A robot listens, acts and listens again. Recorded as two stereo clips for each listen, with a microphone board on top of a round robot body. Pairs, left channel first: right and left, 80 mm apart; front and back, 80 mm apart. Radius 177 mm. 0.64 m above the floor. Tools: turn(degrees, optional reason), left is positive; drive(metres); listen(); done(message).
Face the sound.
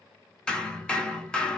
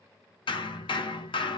turn(degrees=-10, reason="The hammering: 10° right.")
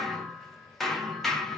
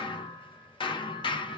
done("Facing the hammering, under 1 m away.")